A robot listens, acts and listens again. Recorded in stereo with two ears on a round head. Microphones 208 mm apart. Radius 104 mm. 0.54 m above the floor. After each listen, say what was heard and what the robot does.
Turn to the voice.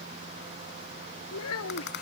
The child speaking: about 70° left or 110° left. Turn 70° left.
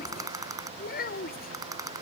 So it is at 40° left. Turn 40° left.
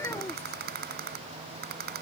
The child speaking is now 10° left. Turn 10° left.
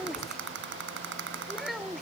Found it: a child speaking, straight ahead.